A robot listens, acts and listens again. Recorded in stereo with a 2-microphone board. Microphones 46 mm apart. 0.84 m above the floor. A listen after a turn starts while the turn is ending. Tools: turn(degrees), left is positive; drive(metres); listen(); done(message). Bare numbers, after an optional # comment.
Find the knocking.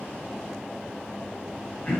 listen()
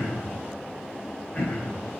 listen()
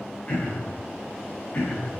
done("I can't make out knocking, only throat clearing.")